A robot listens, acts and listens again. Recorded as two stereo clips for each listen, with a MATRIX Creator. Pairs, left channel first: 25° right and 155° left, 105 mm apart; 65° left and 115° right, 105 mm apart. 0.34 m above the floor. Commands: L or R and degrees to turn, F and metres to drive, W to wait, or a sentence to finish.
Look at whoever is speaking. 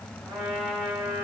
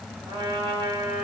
W
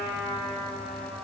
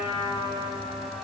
W
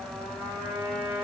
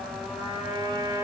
I can't make out anyone speaking to turn to.